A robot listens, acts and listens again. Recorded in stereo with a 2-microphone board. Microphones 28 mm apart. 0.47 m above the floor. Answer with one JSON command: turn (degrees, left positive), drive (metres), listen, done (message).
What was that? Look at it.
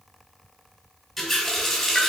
{"turn": -30}
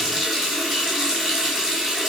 {"turn": -145}
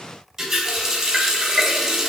{"turn": -10}
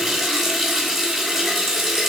{"done": "Found it: a running tap, straight ahead."}